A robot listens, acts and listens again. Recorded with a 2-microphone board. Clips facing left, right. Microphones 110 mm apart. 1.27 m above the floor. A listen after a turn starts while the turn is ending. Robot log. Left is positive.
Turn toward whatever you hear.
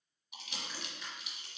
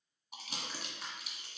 note: The crumpling: about 35° right or 145° right.
cmd yaw -35
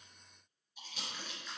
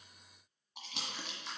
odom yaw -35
note: So it is at 105° right.
cmd yaw -105
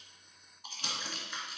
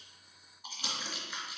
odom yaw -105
note: The crumpling is now 10° right.
cmd yaw -10
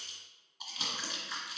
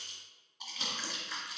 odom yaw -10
end: Found it: crumpling, straight ahead.